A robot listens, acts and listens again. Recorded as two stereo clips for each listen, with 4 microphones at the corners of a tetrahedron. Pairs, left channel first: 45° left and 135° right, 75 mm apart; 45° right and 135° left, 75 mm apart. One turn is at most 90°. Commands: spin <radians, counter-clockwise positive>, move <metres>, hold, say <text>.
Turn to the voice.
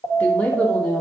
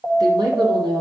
spin 1.57
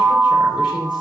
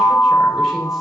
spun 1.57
spin 0.52
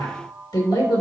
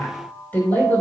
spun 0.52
spin 0.44
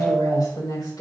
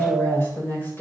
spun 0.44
spin 0.26
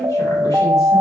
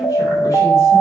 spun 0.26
hold
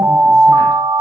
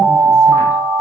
hold
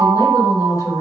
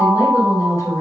say Found it: a woman speaking, straight ahead, over 4 m away.